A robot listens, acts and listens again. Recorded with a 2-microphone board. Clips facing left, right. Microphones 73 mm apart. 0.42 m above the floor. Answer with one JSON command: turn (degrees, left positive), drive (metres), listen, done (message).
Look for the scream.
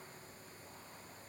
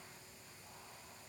{"listen": true}
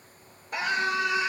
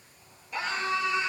{"turn": 60}
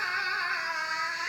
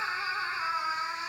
{"turn": 65}
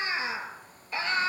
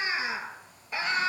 {"turn": -20}
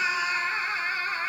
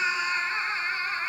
{"done": "Facing the scream."}